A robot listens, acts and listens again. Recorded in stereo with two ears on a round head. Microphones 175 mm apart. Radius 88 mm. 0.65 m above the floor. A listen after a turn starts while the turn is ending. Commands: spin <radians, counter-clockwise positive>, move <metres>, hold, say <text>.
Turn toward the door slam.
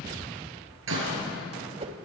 spin -1.22
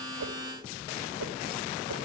hold
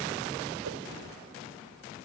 say I heard a door slam, but can't make it out now. It was about straight ahead or 40° right.